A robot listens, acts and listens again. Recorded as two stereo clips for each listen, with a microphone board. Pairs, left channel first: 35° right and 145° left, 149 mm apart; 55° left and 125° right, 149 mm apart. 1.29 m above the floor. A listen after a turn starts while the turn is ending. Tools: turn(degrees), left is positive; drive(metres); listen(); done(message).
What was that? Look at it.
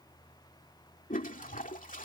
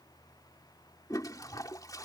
turn(degrees=-10)
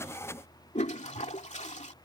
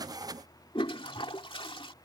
done("Found it: a toilet flushing, straight ahead.")